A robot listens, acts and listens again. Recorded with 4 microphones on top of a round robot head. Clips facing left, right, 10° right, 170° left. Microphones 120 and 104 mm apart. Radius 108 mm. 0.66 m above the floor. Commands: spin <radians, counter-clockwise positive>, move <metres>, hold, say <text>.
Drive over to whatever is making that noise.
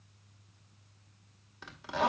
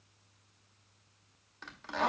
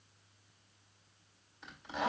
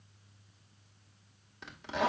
spin 2.97
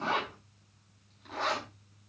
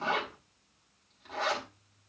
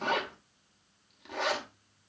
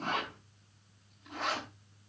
move 1.0
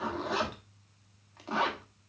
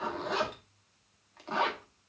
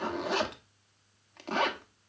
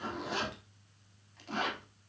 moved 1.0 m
move 1.0
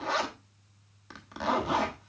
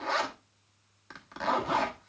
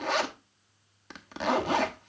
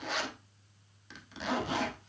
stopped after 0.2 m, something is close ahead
spin 0.17
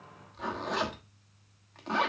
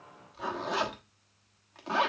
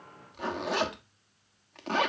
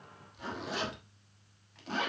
say I am next to the zipper.